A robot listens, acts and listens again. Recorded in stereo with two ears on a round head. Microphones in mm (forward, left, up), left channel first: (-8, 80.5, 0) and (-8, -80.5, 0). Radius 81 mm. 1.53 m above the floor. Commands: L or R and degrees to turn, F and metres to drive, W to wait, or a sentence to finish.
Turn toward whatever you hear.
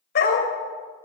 L60
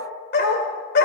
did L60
L60
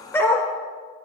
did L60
L15
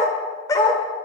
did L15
L20
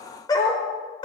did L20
L30
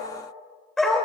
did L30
Found it: a dog barking, straight ahead, 2 to 4 m away.